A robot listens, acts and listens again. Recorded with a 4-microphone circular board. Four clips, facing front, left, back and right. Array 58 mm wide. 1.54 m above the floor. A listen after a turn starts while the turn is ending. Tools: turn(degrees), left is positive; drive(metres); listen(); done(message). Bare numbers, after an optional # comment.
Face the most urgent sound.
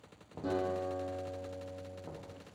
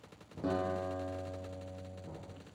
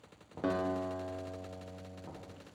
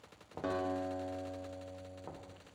listen()
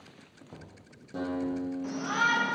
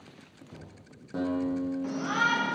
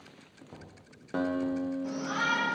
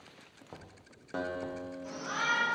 # The shout: 65° left.
turn(65)
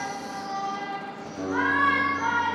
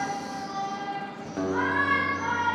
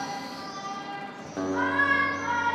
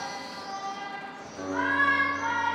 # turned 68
done("Facing the shout, 1 to 2 m away.")